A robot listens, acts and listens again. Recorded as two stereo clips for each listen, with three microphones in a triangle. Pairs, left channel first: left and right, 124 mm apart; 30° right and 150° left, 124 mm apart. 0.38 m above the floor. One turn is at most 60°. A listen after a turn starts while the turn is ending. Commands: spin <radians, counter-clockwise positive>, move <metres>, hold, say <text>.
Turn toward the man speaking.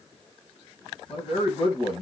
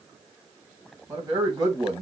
spin 1.05
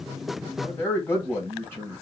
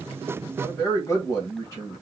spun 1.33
spin 0.44
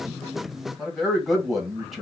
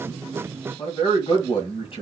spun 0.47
say Facing the man speaking, 1 to 2 m away.